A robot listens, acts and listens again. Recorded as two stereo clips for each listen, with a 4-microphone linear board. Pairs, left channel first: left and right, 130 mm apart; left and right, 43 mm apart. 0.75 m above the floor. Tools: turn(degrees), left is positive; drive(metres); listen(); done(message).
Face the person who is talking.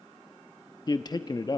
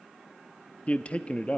turn(degrees=35)
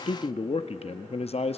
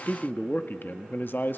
turn(degrees=105)
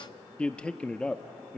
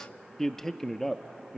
turn(degrees=10)
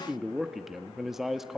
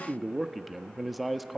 done("Facing the man speaking, under 1 m away.")